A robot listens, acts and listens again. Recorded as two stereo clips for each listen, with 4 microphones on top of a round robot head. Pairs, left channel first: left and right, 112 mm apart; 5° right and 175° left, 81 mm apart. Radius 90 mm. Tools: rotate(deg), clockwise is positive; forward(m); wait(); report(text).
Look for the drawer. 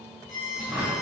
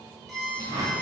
rotate(170)
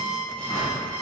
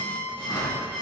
wait()
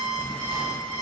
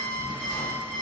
wait()
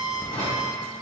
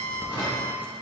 rotate(-35)
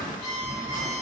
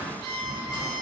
rotate(-15)
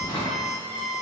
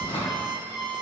report("Found it: a drawer, straight ahead.")